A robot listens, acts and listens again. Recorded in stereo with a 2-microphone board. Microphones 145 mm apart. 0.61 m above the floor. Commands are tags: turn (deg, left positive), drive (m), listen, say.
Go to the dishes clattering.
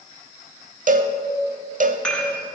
<turn deg="30"/>
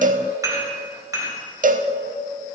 <turn deg="-25"/>
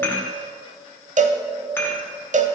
<turn deg="15"/>
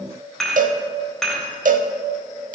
<drive m="1.0"/>
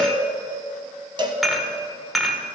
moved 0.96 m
<drive m="1.0"/>
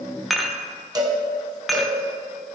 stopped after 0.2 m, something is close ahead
<say>I am next to the dishes clattering.</say>